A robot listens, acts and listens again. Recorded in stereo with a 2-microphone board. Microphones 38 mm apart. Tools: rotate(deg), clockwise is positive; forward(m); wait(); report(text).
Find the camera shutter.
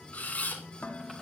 rotate(-45)
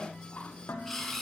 report("Facing the camera shutter.")